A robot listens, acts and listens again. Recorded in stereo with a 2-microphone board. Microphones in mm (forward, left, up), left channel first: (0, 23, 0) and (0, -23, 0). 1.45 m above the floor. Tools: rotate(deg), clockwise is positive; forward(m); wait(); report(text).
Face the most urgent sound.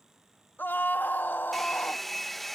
rotate(-45)
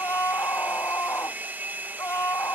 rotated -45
rotate(-90)
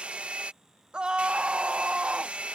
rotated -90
rotate(20)
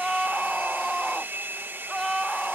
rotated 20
report("Facing the scream.")